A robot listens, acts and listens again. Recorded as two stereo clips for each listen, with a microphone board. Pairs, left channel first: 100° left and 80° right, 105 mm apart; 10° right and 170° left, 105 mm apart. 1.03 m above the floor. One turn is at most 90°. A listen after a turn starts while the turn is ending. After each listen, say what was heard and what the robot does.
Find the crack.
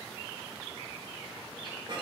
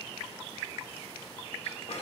Keep listening.
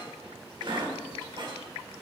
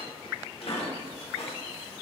Keep listening.
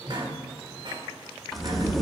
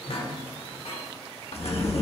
The crack: 10° left. Turn 10° left.
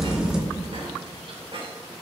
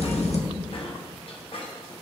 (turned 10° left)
Found it: a crack, straight ahead, 1 to 2 m away.